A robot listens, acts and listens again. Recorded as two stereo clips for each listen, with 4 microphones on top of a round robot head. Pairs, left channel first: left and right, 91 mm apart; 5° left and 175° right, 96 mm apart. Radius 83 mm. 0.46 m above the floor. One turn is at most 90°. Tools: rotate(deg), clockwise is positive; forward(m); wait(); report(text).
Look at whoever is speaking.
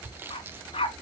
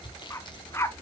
wait()
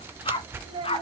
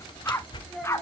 rotate(80)
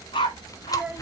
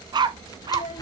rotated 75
rotate(10)
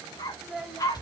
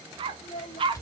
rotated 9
report("Found it: a child speaking, straight ahead.")